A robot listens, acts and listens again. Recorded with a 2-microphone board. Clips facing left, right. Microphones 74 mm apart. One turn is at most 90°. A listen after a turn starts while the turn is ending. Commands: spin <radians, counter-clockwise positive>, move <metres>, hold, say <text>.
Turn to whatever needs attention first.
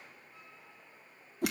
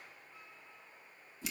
hold
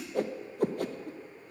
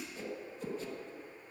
hold
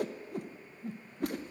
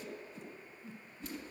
say I can't make out anything urgent to turn to.